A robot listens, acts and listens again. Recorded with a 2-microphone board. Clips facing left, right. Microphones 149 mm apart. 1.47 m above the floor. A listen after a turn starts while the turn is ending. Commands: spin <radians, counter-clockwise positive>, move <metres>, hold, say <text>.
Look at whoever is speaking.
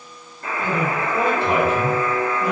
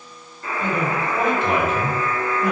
spin 0.61
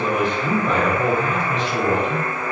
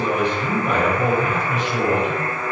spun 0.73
spin -0.17
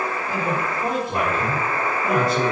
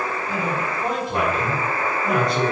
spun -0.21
say Facing the man speaking, 1 to 2 m away.